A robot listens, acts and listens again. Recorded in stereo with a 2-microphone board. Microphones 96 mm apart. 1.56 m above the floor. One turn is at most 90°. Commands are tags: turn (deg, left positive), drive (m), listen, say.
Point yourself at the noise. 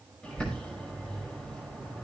<turn deg="30"/>
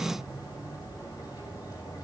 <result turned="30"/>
<turn deg="90"/>
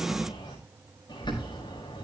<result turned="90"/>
<turn deg="50"/>
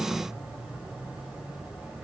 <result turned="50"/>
<turn deg="-15"/>
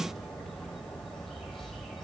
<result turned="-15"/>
<say>Facing the bird.</say>